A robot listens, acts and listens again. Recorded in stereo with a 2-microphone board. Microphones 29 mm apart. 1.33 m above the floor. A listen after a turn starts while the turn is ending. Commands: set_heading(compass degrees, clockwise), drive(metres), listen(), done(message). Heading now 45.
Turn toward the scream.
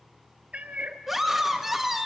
set_heading(75)
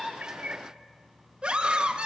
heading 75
set_heading(220)
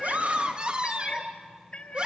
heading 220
set_heading(255)
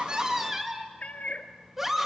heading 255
set_heading(270)
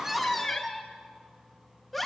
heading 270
done("Facing the scream.")